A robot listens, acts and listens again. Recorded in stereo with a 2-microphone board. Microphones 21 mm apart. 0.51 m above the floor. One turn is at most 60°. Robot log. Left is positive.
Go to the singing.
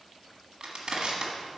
cmd idle
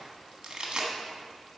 cmd idle
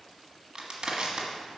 end: I can't make out singing, only crushing.